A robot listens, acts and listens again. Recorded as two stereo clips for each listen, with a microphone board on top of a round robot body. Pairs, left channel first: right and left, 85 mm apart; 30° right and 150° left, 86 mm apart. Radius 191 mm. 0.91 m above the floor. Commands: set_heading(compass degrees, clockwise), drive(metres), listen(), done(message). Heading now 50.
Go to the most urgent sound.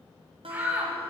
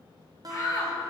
set_heading(30)
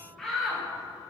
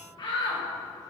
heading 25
drive(1.0)
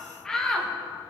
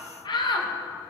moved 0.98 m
set_heading(35)
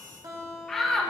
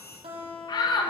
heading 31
drive(1.0)
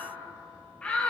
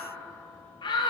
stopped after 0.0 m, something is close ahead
set_heading(46)
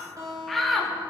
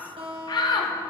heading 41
done("Arrived at the shout, straight ahead.")